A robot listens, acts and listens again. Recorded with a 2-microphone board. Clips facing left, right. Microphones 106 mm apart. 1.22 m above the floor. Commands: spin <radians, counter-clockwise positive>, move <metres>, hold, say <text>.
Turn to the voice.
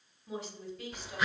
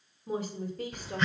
spin -0.79
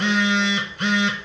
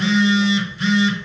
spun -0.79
hold
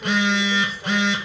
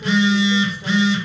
hold
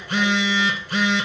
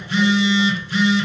say I heard a woman speaking, but can't make it out now. It was about straight ahead or 90° right.